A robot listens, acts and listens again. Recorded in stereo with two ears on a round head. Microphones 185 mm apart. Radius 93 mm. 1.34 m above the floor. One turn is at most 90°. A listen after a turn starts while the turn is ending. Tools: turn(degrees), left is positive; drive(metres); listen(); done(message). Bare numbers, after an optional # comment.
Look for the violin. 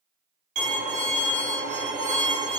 # The violin: about 35° right or 145° right.
turn(-35)
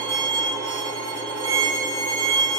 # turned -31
# So it is at 110° right.
turn(-90)
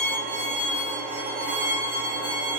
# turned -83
# The violin is now 30° right.
turn(-30)
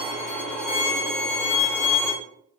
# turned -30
done("Facing the violin, under 1 m away.")